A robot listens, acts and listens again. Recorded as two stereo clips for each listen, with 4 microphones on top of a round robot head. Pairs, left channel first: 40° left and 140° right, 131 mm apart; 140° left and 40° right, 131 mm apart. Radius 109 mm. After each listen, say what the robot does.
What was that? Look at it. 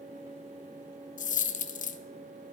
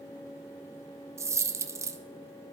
Turn 30° left.
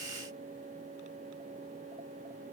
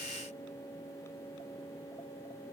Facing where the dropped coin came from. I can't hear it now.